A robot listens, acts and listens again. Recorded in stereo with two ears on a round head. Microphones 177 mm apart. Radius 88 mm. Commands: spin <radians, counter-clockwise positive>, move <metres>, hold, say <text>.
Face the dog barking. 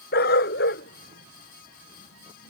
spin 1.05
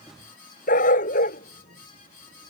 spin 0.79
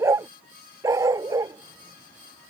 spin -0.26
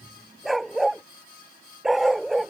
say Facing the dog barking.